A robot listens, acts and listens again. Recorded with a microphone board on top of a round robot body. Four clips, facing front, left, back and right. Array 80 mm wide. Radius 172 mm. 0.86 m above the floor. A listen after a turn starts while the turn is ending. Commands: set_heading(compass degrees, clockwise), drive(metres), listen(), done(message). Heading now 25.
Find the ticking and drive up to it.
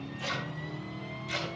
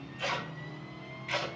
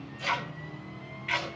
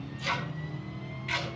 set_heading(195)
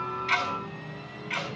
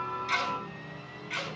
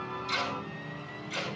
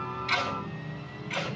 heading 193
drive(1.0)
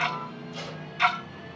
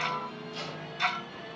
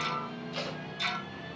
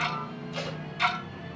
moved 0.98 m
set_heading(203)
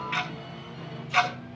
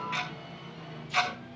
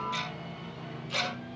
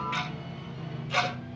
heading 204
drive(1.0)
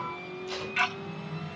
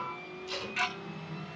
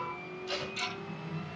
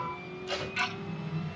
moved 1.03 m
drive(1.0)
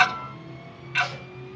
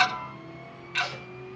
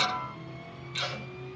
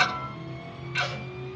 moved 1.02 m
drive(1.0)
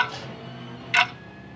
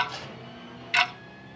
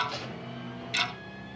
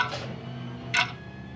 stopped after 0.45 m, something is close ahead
set_heading(194)
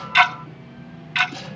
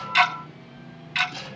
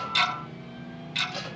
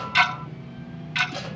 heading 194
done("I am next to the ticking.")